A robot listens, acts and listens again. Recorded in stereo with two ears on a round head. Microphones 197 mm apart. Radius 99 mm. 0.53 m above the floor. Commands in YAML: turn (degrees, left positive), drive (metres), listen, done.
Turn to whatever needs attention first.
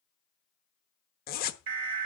turn: -60
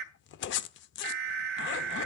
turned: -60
turn: -50
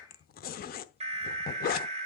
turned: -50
turn: -30
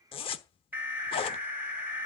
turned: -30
turn: -10
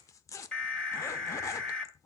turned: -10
done: "Found it: an alarm, straight ahead, 1 to 2 m away."